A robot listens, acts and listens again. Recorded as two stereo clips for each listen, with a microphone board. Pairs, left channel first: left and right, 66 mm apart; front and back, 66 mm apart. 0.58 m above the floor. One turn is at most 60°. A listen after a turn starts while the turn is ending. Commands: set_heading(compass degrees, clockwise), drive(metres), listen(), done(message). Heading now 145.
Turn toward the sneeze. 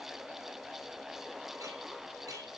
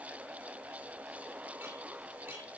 listen()
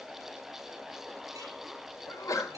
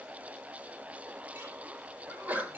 set_heading(85)
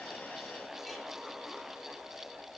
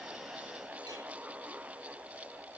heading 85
set_heading(25)
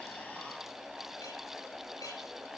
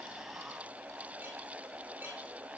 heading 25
done("I heard a sneeze from this way, but can't make it out now.")